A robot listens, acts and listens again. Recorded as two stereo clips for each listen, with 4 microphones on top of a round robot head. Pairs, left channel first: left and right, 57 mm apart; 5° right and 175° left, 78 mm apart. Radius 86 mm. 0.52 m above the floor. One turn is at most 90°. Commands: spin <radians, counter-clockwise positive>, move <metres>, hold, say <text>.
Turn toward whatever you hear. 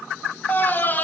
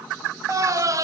spin 1.57
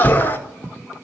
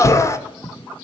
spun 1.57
spin 0.61
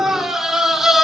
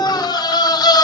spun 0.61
say Found it: a scream, straight ahead, 1 to 2 m away.